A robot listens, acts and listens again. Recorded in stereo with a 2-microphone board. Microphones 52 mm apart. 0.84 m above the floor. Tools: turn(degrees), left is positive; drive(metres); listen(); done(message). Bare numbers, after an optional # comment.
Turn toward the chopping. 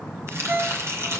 # The chopping: about 55° right or 125° right.
turn(-55)
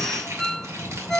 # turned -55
listen()
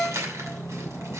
# So it is at 70° right.
turn(-70)
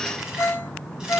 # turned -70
listen()
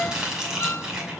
# The chopping is now 15° right.
turn(-15)
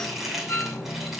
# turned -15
done("Facing the chopping.")